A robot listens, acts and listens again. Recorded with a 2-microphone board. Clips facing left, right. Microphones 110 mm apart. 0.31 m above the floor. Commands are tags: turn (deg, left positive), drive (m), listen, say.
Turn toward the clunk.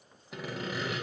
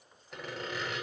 <listen/>
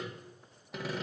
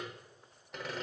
<listen/>
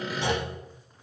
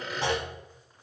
<turn deg="-45"/>
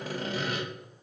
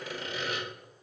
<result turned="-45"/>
<listen/>
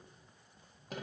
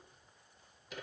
<say>I heard a clunk, but can't make it out now. It was about straight ahead or 90° right.</say>